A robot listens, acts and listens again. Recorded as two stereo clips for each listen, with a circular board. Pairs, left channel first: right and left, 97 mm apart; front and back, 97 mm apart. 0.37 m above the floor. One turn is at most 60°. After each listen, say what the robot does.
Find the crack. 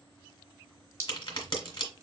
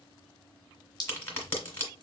Turn 60° right.
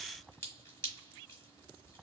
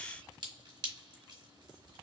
I heard a crack from this way, but can't make it out now.